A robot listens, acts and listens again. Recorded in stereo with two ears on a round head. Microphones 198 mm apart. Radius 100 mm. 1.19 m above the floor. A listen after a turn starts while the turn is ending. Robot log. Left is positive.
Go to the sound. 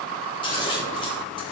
note: The scissors: about 20° left or 160° left.
cmd yaw +20
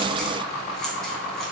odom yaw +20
cmd idle
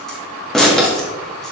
cmd fwd 1.0
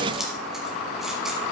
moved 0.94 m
cmd idle
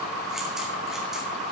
cmd idle
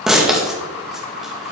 cmd fwd 1.0
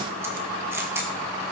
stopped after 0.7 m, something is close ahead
note: The scissors is now 15° right.
cmd yaw -15
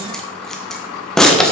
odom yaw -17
end: Arrived at the scissors, straight ahead.